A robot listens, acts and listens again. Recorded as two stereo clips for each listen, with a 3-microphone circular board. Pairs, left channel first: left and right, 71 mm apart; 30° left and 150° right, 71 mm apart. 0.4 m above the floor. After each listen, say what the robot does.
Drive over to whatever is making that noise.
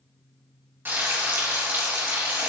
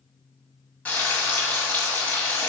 Turn 40° right.
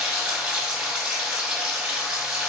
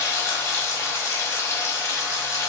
Turn 15° right.
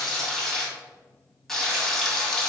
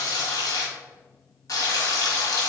Drive 1.0 m forward.
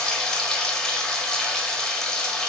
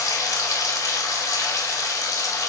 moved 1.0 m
Turn 10° left.
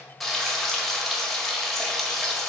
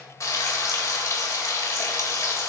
Drive 1.0 m forward.
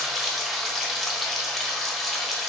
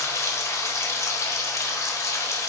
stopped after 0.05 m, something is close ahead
Arrived at the frying, straight ahead.